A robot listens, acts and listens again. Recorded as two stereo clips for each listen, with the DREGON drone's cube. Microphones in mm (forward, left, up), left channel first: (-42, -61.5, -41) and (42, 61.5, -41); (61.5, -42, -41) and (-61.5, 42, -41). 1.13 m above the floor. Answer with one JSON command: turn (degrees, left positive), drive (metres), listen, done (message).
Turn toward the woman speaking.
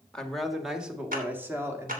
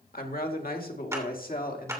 {"turn": -15}
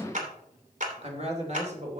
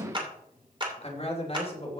{"turn": 15}
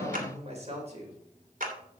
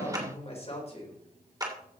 {"turn": 15}
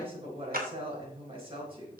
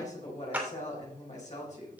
{"done": "Facing the woman speaking."}